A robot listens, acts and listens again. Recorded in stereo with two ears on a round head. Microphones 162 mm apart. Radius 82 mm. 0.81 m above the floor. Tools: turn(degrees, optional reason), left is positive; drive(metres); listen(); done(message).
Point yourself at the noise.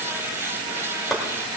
turn(degrees=30)
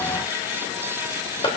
turn(degrees=150, reason="So it is at 150° left.")
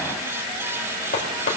turn(degrees=50, reason="The chopping is now 50° left.")
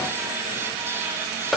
done("Facing the chopping, 2 to 4 m away.")